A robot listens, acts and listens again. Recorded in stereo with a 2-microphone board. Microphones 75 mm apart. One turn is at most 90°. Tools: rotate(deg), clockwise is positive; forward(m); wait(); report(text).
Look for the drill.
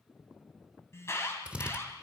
rotate(15)
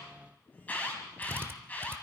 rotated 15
rotate(90)
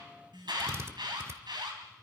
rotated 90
rotate(40)
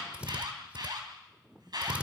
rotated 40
rotate(20)
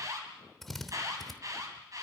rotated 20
report("Found it: a drill, straight ahead.")